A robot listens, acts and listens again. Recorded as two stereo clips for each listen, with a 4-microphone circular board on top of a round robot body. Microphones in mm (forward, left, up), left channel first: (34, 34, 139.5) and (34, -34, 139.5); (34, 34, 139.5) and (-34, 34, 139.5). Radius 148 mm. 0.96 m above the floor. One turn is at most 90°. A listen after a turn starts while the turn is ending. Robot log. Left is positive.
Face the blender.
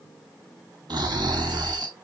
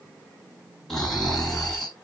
cmd idle
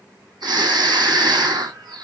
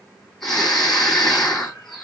cmd idle
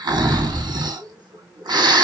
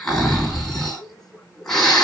end: I can't make out a blender, only snoring.